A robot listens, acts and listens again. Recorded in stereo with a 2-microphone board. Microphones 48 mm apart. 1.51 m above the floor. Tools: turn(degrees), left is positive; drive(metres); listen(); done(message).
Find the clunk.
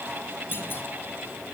turn(degrees=50)
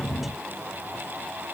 listen()
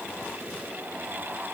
done("I heard a clunk, but can't make it out now. It was about straight ahead or 80° left.")